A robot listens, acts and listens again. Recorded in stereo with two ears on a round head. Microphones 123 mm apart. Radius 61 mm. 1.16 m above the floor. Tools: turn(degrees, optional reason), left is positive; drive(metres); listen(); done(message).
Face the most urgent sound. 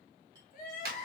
turn(degrees=65, reason="The crying: about 65° left or 115° left.")
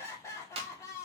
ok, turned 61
turn(degrees=25, reason="So it is at 25° left.")
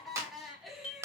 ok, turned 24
done("Found it: crying, straight ahead.")